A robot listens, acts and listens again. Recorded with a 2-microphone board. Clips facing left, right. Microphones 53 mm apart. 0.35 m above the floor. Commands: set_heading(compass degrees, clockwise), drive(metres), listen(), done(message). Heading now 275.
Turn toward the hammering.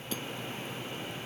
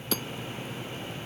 set_heading(350)
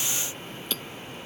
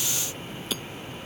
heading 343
done("Facing the hammering.")